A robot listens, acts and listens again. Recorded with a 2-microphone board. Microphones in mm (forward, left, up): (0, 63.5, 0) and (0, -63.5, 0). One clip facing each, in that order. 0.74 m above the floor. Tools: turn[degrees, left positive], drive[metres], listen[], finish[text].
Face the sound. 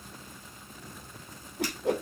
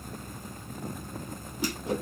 Thought: The whoosh: about 70° left or 110° left.
Action: turn[70]
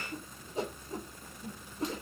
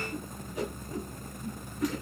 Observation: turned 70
Thought: So it is at 30° left.
Action: turn[30]
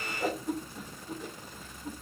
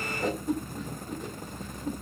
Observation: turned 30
Action: finish[Facing the whoosh.]